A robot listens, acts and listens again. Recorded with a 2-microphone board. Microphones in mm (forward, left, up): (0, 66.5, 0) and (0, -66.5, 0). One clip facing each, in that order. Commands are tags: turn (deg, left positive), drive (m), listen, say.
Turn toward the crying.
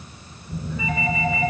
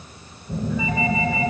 <listen/>
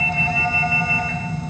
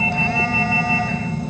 <listen/>
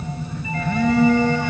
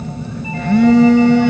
<say>I can't make out crying, only a phone buzzing.</say>